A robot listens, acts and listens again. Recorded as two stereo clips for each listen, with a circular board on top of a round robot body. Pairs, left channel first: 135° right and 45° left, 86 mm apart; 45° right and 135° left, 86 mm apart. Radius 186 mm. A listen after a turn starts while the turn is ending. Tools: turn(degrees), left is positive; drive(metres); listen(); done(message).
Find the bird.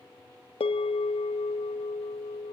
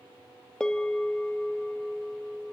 listen()
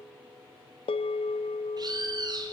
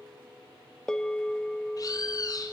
done("Found it: a bird, straight ahead, 2 to 4 m away.")